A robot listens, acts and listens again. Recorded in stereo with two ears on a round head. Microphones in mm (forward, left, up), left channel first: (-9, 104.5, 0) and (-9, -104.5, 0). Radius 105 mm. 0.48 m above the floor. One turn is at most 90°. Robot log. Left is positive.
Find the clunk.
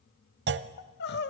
note: The clunk: about 50° right or 130° right.
cmd yaw -50
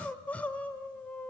cmd idle
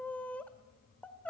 end: I heard a clunk, but can't make it out now. It was about straight ahead or 80° right.